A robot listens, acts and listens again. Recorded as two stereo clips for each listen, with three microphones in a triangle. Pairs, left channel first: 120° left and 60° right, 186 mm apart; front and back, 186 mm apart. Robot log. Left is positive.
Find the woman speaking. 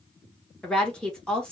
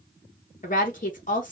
note: The woman speaking: 35° left.
cmd yaw +35
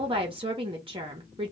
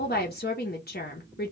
end: Facing the woman speaking.